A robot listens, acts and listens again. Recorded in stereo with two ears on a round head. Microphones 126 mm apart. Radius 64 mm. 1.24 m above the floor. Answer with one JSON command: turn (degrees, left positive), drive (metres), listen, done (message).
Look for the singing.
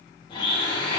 {"listen": true}
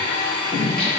{"turn": 30}
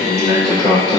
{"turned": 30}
{"turn": 135}
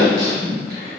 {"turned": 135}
{"turn": -30}
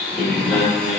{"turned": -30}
{"done": "Found it: singing, straight ahead."}